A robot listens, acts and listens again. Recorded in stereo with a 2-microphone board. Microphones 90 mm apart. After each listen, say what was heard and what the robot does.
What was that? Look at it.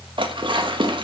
The dishes clattering: about 60° right or 120° right. Turn 60° right.
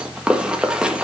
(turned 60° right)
So it is at 10° right. Turn 10° right.
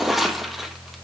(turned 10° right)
Found it: dishes clattering, straight ahead, 1 to 2 m away.